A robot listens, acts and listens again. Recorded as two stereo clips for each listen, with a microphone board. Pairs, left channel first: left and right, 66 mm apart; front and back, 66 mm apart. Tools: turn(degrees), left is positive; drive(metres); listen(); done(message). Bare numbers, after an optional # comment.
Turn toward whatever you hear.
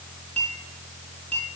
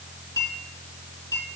# The clink: 20° left.
turn(20)
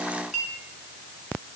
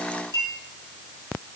done("Facing the clink, over 4 m away.")